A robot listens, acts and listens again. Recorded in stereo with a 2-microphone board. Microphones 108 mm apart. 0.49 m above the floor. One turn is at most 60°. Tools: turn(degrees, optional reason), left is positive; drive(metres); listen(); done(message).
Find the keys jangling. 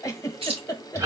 turn(degrees=-60, reason="The keys jangling: about 60° right or 120° right.")
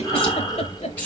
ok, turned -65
turn(degrees=15, reason="So it is at 15° left.")
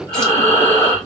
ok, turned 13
listen()
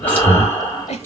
turn(degrees=20, reason="The keys jangling is now 20° left.")
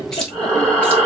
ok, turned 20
listen()
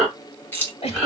turn(degrees=20, reason="The keys jangling is now 20° left.")
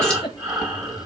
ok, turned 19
listen()
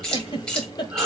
turn(degrees=10, reason="The keys jangling is now 10° left.")
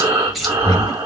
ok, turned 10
done("Found it: keys jangling, straight ahead, 1 to 2 m away.")